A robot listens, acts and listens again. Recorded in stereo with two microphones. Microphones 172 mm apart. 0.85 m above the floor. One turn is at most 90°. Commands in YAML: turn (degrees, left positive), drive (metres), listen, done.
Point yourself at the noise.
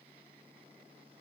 listen: true
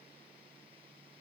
listen: true
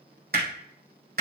turn: -65
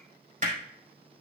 turn: -45
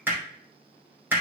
turn: -10
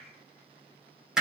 done: "Facing the hammering, 2 to 4 m away."